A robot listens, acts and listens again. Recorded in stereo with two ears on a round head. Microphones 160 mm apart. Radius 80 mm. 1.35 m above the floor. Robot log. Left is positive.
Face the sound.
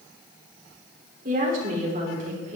note: The woman speaking: about 40° right or 140° right.
cmd yaw -40
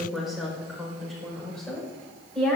end: Facing the woman speaking.